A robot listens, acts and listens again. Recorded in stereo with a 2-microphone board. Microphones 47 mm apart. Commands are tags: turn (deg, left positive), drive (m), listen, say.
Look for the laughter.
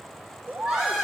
<turn deg="-30"/>
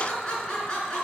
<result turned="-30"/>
<turn deg="20"/>
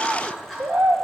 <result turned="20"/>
<listen/>
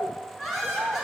<say>Found it: laughter, straight ahead, over 4 m away.</say>